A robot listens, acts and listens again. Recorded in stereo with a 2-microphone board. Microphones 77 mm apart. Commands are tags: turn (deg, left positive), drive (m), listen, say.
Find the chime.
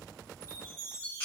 <turn deg="-35"/>
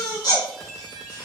<say>Facing the chime.</say>